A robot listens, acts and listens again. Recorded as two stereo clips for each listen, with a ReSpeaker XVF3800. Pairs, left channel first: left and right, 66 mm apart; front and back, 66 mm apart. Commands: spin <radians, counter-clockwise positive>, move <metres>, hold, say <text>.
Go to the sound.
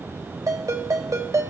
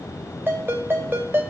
spin -2.18
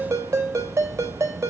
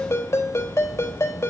spin -0.79
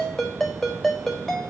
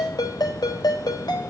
move 1.0
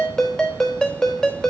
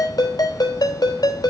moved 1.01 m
spin 0.17
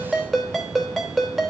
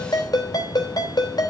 move 1.0
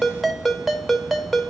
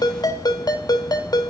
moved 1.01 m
move 1.0
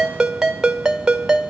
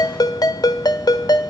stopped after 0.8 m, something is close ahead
spin -0.17
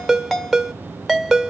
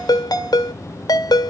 say I am next to the ringtone.